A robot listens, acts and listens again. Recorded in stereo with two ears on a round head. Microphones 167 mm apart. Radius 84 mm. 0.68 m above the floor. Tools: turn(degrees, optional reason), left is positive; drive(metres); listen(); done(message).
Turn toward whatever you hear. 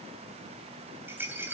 turn(degrees=-30)
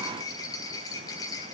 turn(degrees=20, reason="So it is at 20° left.")
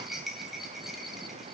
done("Facing the rattle, 2 to 4 m away.")